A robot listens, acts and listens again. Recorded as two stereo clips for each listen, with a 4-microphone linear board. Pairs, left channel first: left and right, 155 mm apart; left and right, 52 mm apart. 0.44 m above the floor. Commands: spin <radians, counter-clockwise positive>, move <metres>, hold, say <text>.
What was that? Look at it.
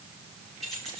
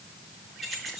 spin 0.52
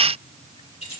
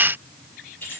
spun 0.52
spin 2.44
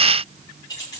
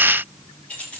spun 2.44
spin 0.44
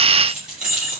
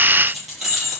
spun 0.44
say Facing the keys jangling, over 4 m away.